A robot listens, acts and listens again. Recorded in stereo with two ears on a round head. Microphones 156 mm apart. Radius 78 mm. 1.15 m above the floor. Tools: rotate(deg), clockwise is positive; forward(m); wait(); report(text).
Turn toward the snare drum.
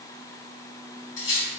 wait()
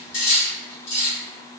wait()
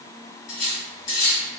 report("I can't make out a snare drum, only cutlery clinking.")